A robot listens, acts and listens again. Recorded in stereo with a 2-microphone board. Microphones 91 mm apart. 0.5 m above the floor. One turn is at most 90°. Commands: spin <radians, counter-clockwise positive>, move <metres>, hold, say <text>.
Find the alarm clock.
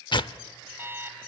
spin -0.44
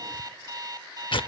spin -1.57
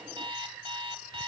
spin -1.57
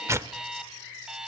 say Found it: an alarm clock, straight ahead, 1 to 2 m away.